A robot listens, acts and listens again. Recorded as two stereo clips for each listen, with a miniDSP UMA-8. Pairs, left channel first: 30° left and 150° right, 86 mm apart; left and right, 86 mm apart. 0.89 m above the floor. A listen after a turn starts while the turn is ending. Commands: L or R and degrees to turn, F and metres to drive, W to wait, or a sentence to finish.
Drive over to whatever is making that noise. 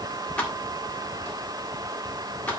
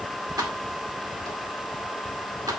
R45
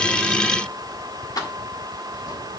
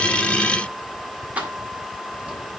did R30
R15
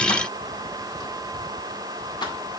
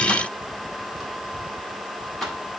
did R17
F1.0
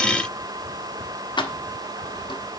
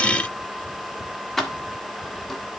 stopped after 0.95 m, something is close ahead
I am next to the keys jangling.